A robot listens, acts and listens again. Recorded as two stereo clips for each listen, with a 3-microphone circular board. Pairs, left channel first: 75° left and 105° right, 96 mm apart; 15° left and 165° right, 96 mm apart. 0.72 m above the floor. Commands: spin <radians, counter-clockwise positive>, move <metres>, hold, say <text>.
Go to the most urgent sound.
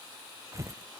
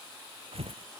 hold
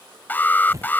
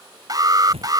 spin 2.53
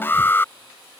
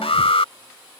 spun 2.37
spin 0.17
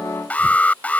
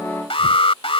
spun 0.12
move 1.0
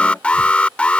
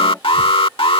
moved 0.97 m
move 1.0
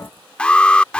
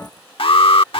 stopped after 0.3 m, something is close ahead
say I am next to the alarm.